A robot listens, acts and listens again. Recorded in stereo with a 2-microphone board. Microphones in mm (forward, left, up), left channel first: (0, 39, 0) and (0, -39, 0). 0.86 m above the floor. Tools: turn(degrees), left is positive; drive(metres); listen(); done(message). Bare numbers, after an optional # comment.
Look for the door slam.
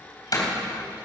# The door slam: about 55° left or 125° left.
turn(55)
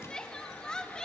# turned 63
listen()
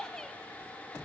done("I heard a door slam, but can't make it out now. It was about 10° right or 65° left.")